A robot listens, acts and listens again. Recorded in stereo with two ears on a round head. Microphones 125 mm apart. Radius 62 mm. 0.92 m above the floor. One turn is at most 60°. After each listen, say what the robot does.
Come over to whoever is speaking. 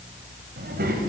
Turn 60° right.
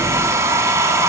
Keep listening.
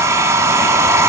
Keep listening.
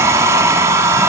I heard a child speaking, but can't make it out now. It was about 10° right or 50° right. I did not reach it.